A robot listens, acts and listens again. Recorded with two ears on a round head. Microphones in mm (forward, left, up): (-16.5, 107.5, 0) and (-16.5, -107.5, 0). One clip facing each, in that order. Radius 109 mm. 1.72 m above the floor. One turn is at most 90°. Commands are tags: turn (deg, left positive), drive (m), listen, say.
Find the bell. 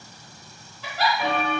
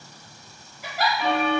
<turn deg="70"/>
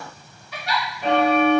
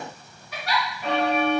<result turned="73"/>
<turn deg="35"/>
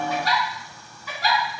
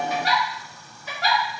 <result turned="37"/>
<listen/>
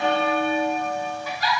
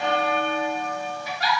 <say>Facing the bell, 1 to 2 m away.</say>